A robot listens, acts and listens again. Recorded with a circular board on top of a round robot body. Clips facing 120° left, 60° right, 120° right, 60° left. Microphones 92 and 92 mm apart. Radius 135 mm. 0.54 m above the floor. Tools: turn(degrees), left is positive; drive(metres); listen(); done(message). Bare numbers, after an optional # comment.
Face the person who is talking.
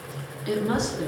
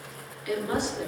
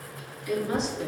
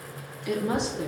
# The woman speaking: 55° left.
turn(55)
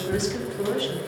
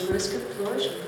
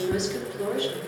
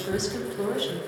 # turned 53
done("Found it: a woman speaking, straight ahead, 2 to 4 m away.")